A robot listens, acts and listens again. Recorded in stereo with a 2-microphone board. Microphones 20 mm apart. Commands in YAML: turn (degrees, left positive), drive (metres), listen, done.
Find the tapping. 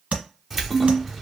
turn: -70
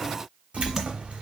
listen: true
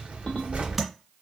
listen: true
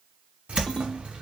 done: "I heard tapping, but can't make it out now. It was about straight ahead or 40° right."